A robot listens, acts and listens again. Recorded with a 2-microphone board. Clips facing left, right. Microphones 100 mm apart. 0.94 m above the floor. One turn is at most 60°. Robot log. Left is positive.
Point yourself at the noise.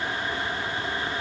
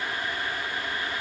cmd idle
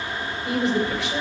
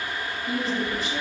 cmd yaw +60
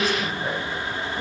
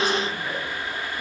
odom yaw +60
note: So it is at 40° left.
cmd yaw +40
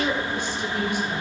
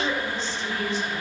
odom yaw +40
note: The woman speaking is now 15° left.
cmd yaw +15
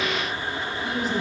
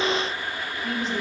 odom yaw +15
note: The woman speaking is now 10° left.
cmd yaw +10
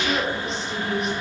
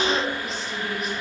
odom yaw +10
end: Facing the woman speaking.